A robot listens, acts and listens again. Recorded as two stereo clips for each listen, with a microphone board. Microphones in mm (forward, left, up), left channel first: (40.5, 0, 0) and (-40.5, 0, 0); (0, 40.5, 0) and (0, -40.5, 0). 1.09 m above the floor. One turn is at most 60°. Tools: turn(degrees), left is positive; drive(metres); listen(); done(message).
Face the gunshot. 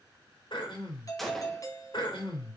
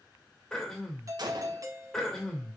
turn(degrees=-60)
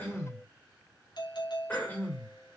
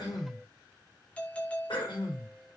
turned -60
turn(degrees=-30)
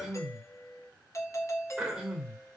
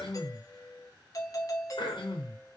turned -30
done("I heard a gunshot from this way, but can't make it out now.")